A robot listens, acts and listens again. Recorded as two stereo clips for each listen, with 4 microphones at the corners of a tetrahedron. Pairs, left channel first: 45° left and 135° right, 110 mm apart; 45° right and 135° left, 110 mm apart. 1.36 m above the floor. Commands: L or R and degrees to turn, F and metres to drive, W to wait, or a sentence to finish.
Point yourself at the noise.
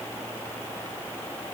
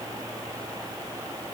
W
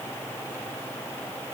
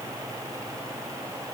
W
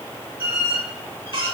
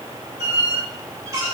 R170
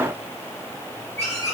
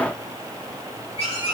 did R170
R20
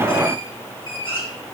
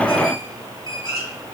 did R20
Facing the squeak.